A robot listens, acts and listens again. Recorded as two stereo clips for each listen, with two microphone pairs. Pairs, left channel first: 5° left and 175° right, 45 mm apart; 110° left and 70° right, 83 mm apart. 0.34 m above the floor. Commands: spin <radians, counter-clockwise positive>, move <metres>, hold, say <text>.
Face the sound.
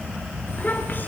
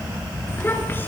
spin 0.79
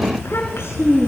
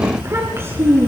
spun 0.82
spin -0.26
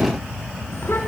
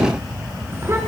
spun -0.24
spin -0.26
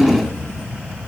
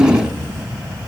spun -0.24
spin -0.17
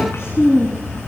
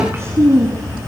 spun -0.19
spin -0.35
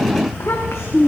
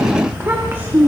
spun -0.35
say Facing the child speaking.